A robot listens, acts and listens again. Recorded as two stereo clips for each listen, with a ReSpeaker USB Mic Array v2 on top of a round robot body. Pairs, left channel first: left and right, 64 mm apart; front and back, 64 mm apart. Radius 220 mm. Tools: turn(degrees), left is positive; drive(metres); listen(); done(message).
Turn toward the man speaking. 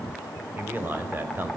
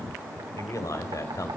turn(degrees=-30)
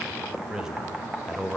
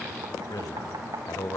turn(degrees=-10)
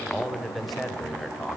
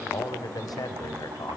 done("Facing the man speaking, over 4 m away.")